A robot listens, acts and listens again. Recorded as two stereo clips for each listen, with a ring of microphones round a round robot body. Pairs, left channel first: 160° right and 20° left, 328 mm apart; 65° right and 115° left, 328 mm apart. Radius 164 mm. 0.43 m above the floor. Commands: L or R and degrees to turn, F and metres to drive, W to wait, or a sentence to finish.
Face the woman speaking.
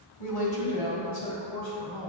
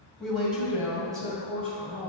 L180
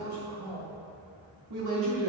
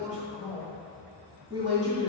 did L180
L35
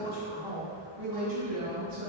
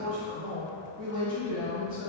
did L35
Found it: a woman speaking, straight ahead, over 4 m away.